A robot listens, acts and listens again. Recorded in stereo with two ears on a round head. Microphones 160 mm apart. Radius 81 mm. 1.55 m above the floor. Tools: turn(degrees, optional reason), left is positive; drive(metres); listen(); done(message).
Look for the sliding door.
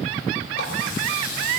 listen()
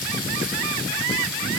listen()
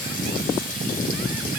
done("I can't make out a sliding door, only a running tap.")